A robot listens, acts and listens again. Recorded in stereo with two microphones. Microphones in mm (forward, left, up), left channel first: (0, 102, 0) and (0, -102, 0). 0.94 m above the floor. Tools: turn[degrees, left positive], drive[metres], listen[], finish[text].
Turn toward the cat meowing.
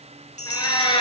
Thought: The cat meowing: about 25° left or 155° left.
Action: turn[25]
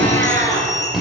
Action: turn[30]
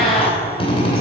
Action: listen[]
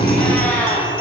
Thought: So it is at 10° left.
Action: turn[10]
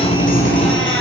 Action: listen[]
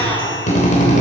Action: listen[]
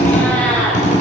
Action: finish[Found it: a cat meowing, straight ahead.]